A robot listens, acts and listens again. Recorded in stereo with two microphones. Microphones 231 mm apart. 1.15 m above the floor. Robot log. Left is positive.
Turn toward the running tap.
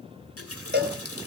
cmd yaw +90
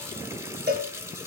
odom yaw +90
note: So it is at 10° right.
cmd yaw -10
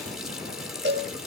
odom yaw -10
end: Found it: a running tap, straight ahead.